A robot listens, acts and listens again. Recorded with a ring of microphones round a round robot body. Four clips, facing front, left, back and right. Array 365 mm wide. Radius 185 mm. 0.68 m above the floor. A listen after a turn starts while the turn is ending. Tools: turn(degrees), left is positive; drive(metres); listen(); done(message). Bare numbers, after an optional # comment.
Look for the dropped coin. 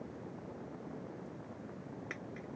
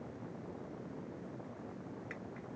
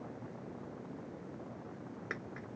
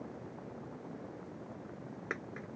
# The dropped coin: 105° right.
turn(-105)
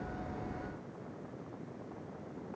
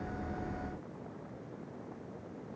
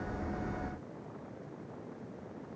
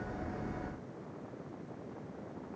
done("Facing where the dropped coin came from. I can't hear it now.")